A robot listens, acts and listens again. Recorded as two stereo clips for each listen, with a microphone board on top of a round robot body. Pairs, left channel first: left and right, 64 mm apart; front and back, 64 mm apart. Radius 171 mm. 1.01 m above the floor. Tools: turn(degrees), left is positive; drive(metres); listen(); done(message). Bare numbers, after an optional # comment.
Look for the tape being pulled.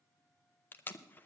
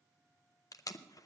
# The tape being pulled: 30° left.
turn(30)
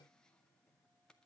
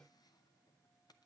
listen()
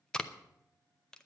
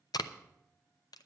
# The tape being pulled is now 15° left.
turn(15)
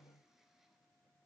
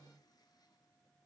listen()
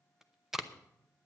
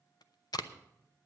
done("Facing the tape being pulled, under 1 m away.")